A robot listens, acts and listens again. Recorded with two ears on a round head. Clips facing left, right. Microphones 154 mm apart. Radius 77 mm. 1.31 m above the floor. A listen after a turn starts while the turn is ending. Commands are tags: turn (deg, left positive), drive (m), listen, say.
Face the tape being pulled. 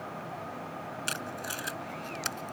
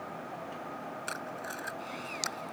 <turn deg="35"/>
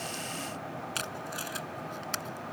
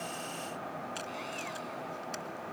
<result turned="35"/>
<turn deg="105"/>
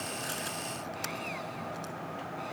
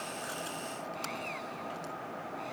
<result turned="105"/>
<listen/>
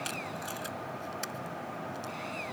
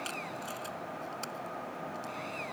<turn deg="10"/>
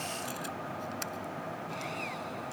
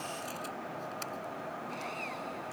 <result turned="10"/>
<say>Found it: tape being pulled, straight ahead.</say>